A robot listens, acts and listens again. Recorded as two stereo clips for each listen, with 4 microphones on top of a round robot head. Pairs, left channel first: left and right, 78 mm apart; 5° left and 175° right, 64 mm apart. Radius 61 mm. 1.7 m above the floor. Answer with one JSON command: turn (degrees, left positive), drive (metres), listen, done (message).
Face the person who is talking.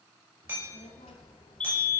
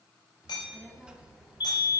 {"turn": 110}
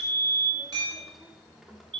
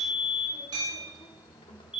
{"done": "Facing the child speaking."}